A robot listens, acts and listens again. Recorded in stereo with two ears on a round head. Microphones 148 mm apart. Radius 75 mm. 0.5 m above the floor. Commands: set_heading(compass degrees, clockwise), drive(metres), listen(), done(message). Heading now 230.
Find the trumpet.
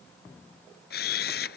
listen()
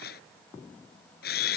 listen()
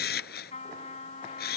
set_heading(190)
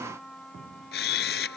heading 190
done("Found it: a trumpet, straight ahead.")